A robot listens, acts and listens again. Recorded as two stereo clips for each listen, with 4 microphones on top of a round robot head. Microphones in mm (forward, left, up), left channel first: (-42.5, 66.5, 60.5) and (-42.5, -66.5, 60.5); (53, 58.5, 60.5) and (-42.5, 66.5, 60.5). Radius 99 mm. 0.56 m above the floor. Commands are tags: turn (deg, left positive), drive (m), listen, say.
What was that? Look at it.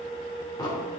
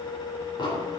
<turn deg="30"/>
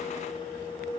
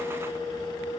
<say>I heard an explosion from this way, but can't make it out now.</say>